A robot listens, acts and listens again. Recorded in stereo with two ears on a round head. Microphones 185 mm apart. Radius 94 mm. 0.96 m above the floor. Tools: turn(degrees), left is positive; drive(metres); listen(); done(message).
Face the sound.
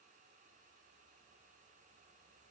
listen()
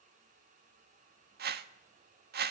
turn(degrees=-50)
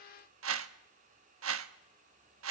turn(degrees=-75)
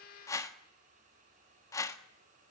turn(degrees=15)
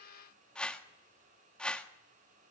done("Found it: a whoosh, straight ahead, 1 to 2 m away.")